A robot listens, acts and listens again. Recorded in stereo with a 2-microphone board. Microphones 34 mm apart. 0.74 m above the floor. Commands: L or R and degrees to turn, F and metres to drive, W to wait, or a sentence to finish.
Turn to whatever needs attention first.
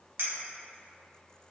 W
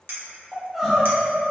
L30
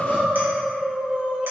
R35
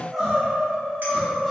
Facing the crying, 1 to 2 m away.